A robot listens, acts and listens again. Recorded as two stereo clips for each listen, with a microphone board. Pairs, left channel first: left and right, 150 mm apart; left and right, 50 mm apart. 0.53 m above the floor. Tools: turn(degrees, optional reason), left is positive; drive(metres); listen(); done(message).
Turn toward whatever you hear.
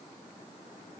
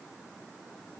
listen()
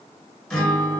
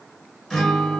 turn(degrees=30)
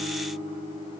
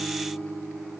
turn(degrees=145, reason="So it is at 145° left.")
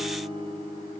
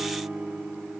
turn(degrees=-35, reason="The guitar is now 35° right.")
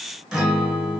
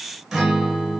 done("Found it: a guitar, straight ahead, 1 to 2 m away.")